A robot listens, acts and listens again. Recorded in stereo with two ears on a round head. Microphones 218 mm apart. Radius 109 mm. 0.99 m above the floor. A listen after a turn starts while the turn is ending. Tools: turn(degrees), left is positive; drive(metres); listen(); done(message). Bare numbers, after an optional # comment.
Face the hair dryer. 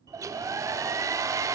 turn(-30)
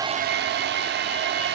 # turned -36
# So it is at 130° right.
turn(-130)
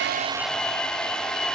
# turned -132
done("Facing the hair dryer, under 1 m away.")